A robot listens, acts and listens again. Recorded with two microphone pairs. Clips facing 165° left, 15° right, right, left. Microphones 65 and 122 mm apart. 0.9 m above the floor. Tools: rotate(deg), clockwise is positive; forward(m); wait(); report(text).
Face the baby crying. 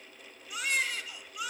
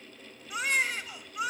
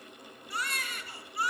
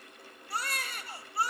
rotate(-40)
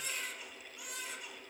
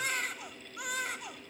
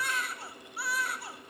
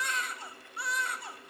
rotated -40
report("Found it: a baby crying, straight ahead.")